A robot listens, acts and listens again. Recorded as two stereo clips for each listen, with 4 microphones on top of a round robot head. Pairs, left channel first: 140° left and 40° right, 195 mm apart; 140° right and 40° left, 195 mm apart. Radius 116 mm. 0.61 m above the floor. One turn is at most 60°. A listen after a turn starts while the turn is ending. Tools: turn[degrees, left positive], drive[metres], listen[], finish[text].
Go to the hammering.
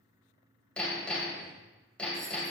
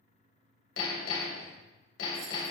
Thought: The hammering: 135° right.
Action: turn[-60]
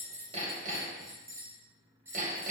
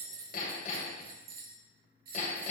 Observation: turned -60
Thought: The hammering is now 85° right.
Action: turn[-60]
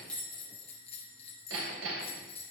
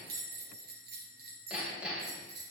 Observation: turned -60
Thought: The hammering is now 45° right.
Action: turn[-45]
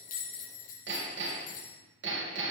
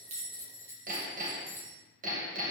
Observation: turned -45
Thought: The hammering is now 10° right.
Action: turn[-10]
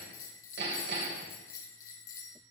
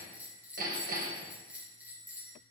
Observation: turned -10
Action: drive[1.0]
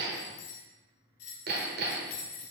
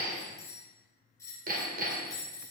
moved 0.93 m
Action: drive[1.0]
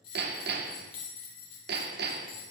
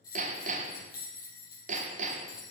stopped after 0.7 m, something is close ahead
Thought: The hammering is now 10° right.
Action: turn[-10]
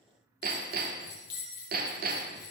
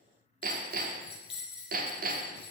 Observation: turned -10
Action: finish[Arrived at the hammering, straight ahead.]